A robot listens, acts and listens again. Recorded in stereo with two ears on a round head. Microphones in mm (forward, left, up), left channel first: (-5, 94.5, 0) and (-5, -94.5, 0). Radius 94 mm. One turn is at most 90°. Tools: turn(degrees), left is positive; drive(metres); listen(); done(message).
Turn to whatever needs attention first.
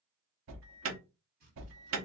turn(degrees=-70)
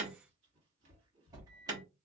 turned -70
turn(degrees=-20)
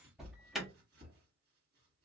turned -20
done("Found it: an alarm, straight ahead, under 1 m away.")